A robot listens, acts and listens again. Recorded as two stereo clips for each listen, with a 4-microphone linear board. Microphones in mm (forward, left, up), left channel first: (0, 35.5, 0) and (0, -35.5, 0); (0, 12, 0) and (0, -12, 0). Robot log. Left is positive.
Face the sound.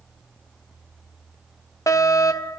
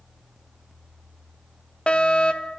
note: The fire alarm: about 50° left or 130° left.
cmd yaw +50
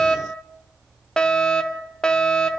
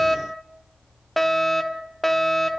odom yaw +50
note: So it is at 15° left.
cmd yaw +15
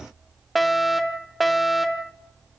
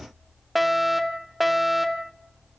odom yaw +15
end: Found it: a fire alarm, straight ahead, 1 to 2 m away.